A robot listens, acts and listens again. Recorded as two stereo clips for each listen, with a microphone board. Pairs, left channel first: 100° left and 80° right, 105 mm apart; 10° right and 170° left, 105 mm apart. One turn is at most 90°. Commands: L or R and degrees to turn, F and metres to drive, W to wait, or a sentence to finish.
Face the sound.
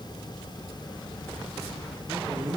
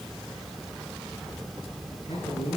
R25
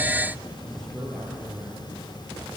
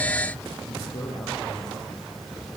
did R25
L15
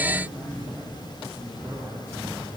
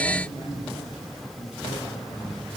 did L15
L10
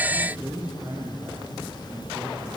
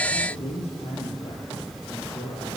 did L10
Found it: a man speaking, straight ahead, over 4 m away.